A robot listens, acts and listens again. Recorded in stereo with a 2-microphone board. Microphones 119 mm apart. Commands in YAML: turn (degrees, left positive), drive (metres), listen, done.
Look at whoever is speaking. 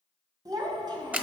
turn: -40
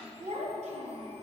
turn: -105
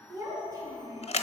turn: -30
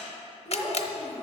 turn: -10
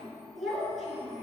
done: "Facing the child speaking."